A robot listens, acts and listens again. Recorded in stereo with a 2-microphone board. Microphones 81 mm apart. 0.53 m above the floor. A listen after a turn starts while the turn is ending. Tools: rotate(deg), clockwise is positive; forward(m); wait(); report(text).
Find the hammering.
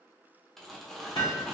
rotate(-75)
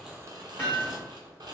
rotate(-25)
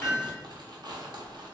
rotate(10)
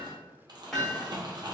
report("Found it: hammering, straight ahead.")